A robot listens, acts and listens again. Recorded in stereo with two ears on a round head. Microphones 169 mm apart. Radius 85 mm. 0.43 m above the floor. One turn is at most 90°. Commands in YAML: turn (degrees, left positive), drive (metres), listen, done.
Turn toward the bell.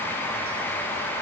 listen: true
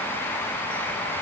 listen: true
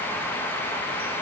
done: "I can't make out a bell."